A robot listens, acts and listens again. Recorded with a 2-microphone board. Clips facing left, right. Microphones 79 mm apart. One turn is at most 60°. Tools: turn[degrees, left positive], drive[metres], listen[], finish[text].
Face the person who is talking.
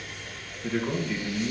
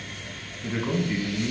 Thought: The man speaking: about 20° right or 160° right.
Action: turn[-20]
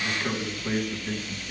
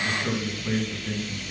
Action: finish[Facing the man speaking, 2 to 4 m away.]